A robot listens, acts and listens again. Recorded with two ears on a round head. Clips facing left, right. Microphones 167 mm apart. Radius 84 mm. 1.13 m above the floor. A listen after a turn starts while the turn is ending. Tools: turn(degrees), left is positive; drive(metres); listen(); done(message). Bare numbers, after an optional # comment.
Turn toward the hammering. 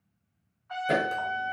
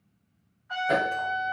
# The hammering: about 35° left or 145° left.
turn(35)
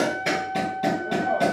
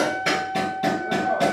done("Found it: hammering, straight ahead.")